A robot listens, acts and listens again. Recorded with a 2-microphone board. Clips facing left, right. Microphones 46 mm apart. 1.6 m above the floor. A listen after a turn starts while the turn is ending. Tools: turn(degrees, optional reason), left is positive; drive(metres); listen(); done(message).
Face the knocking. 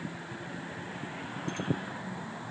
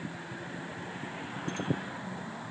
listen()
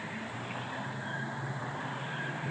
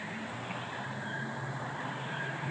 listen()
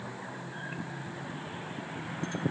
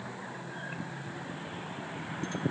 done("I can't make out knocking.")